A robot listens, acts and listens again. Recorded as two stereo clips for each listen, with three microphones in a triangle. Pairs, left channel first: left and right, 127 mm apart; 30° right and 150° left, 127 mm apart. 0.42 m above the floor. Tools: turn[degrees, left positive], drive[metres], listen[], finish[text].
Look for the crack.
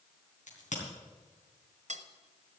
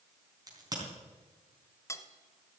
Thought: The crack: 90° left.
Action: turn[90]
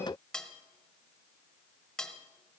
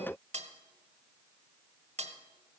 Action: finish[I heard a crack from this way, but can't make it out now.]